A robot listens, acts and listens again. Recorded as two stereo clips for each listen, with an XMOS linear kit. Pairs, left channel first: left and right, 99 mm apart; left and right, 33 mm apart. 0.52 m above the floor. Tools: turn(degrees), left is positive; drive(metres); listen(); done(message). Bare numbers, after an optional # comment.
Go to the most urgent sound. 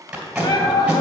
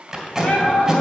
# The shout: about 55° left or 125° left.
turn(55)
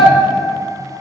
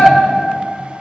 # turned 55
# So it is at 60° left.
turn(60)
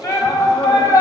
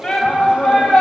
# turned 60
# The shout is now 30° left.
turn(30)
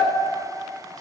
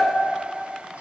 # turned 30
listen()
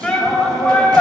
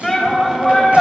drive(1.0)
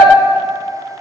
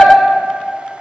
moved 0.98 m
# The shout is now 10° right.
turn(-10)
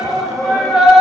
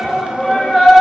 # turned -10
drive(1.0)
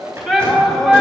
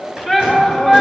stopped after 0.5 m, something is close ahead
done("Arrived at the shout, straight ahead.")